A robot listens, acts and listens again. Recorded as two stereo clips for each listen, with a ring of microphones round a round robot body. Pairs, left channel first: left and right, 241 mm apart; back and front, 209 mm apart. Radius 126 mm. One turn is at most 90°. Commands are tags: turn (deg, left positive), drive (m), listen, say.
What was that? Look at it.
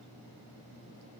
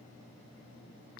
<listen/>
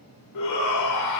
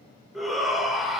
<turn deg="90"/>
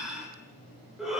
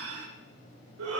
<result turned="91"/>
<say>Found it: a shout, straight ahead, 2 to 4 m away.</say>